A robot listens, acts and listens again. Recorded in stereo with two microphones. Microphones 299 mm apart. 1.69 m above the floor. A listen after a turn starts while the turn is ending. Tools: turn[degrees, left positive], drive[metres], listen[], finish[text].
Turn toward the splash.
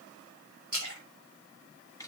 Thought: The splash: about 75° right or 105° right.
Action: turn[-75]
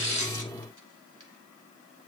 Action: listen[]
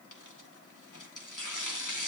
Action: finish[I heard a splash, but can't make it out now. It was about straight ahead or 30° right.]